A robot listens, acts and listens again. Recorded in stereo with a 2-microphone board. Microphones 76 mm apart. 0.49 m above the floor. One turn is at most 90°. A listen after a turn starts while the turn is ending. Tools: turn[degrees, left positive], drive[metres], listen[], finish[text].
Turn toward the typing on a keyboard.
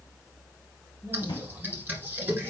Thought: The typing on a keyboard: about 25° right or 155° right.
Action: turn[-25]
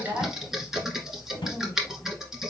Action: finish[Found it: typing on a keyboard, straight ahead, 1 to 2 m away.]